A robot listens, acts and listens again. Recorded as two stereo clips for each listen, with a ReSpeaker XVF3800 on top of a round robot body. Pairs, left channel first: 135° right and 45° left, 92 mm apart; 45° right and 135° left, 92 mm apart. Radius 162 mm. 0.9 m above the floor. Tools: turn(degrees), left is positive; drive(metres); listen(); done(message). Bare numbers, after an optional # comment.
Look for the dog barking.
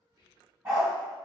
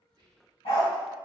# The dog barking: 15° right.
turn(-15)
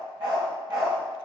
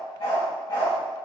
done("Facing the dog barking, 2 to 4 m away.")